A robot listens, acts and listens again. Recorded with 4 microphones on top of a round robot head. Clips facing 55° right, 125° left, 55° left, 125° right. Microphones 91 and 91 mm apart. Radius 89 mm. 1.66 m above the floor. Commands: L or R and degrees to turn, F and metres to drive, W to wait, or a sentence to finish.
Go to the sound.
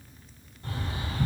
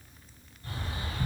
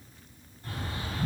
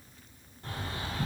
R90
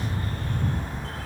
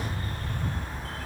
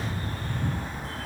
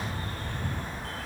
R20
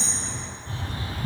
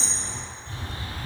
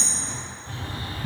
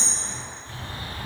F1.0
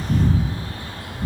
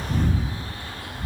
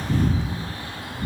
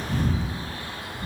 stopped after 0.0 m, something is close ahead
R10
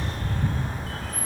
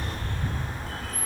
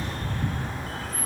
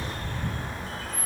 Something is in my way. I am facing the bird but have not reached it.